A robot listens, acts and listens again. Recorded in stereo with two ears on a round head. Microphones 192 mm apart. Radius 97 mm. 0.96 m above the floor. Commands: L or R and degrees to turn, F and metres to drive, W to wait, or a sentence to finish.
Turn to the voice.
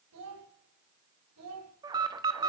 R90
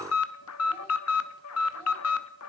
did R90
W
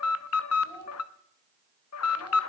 L10
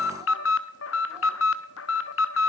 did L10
W
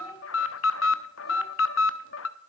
W
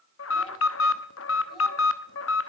I heard a child speaking from this way, but can't make it out now.